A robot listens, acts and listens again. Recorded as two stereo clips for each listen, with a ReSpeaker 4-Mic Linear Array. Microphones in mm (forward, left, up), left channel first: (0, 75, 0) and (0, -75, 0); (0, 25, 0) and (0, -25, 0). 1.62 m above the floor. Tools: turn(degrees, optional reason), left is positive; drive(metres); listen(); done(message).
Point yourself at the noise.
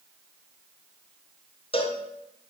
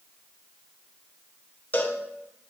turn(degrees=40, reason="The cowbell: about 40° left or 140° left.")
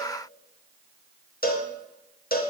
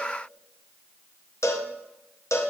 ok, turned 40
turn(degrees=100, reason="So it is at 100° left.")
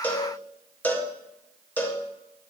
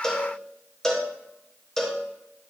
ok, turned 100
turn(degrees=10, reason="The cowbell is now 10° left.")
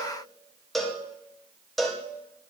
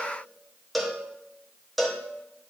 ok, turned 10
done("Facing the cowbell.")